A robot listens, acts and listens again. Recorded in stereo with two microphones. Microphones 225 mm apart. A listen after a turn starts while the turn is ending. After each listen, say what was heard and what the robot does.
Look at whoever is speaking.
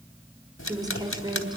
The woman speaking: about 20° right or 160° right. Turn 20° right.
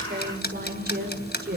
So it is at 135° right. Turn 135° right.
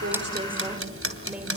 Keep listening.
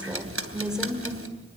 Facing the woman speaking, over 4 m away.